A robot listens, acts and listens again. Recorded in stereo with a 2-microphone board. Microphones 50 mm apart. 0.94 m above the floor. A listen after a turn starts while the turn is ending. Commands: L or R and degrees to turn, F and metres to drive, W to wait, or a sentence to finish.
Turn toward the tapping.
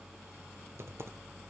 W
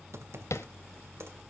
L65
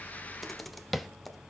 Facing the tapping.